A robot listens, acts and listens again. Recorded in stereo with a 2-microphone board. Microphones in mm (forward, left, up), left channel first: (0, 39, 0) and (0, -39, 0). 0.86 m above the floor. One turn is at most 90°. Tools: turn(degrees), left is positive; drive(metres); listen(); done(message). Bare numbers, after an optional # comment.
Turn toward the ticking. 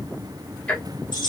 # The ticking: about 15° left or 165° left.
turn(15)
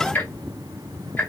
# So it is at 150° left.
turn(90)
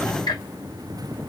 # The ticking is now 65° left.
turn(65)
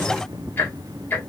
# The ticking is now 25° left.
turn(25)
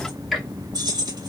done("Facing the ticking, under 1 m away.")